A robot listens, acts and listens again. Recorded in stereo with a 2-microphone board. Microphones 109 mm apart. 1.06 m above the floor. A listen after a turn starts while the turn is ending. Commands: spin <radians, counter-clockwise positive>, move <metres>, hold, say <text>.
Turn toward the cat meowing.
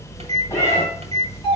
spin 0.52
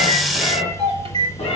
spin 2.01
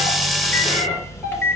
spin 0.26
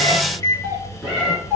say Found it: a cat meowing, straight ahead, over 4 m away.